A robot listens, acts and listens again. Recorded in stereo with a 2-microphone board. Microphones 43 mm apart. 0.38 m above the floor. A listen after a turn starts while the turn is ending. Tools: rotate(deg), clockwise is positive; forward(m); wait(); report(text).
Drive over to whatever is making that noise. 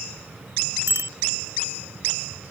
rotate(90)
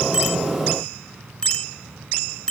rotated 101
rotate(-15)
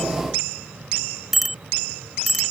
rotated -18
forward(1.0)
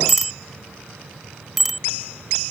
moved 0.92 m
forward(1.0)
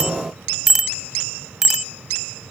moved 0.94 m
rotate(10)
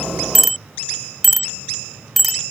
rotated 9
forward(1.0)
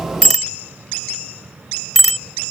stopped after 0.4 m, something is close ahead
rotate(-10)
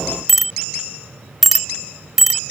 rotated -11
report("I am next to the bicycle bell.")